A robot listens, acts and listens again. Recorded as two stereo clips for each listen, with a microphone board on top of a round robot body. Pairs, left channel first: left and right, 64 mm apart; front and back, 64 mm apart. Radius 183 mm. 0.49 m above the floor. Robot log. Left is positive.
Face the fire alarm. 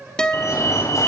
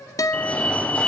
note: The fire alarm: 70° left.
cmd yaw +70
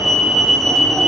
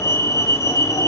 end: Found it: a fire alarm, straight ahead.